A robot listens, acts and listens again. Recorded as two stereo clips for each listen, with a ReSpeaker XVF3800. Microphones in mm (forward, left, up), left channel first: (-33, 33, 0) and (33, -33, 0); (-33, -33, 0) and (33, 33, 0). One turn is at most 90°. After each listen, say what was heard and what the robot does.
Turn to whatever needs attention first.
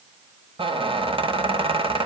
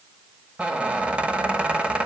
Keep listening.
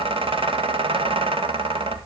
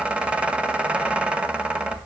Keep listening.
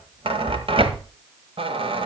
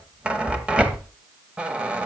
I can't make out anything urgent, only a squeak.